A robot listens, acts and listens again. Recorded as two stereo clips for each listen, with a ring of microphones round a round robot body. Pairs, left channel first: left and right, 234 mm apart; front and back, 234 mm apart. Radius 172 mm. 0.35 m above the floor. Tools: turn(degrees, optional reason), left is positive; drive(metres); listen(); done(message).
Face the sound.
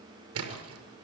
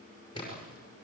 turn(degrees=-80, reason="The splash: 80° right.")
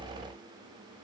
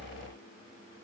done("I heard a splash from this way, but can't make it out now.")